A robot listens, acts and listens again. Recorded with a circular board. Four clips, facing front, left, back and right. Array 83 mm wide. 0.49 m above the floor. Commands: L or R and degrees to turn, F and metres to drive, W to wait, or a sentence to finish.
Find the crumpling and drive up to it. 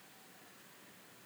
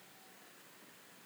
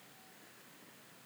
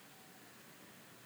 W
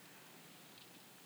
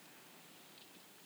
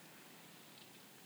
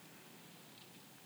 W
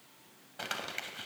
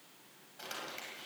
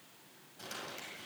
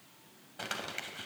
R30
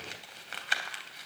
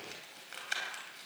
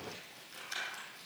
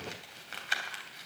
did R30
R20
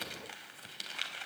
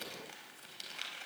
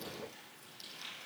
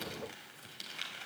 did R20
F1.0
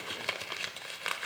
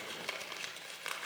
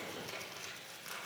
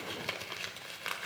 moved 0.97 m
R10
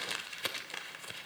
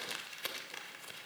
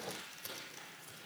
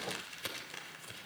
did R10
F1.0
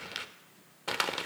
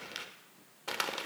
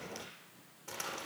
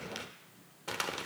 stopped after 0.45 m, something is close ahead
L10
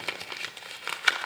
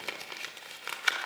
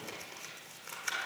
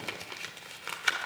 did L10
Arrived at the crumpling, straight ahead.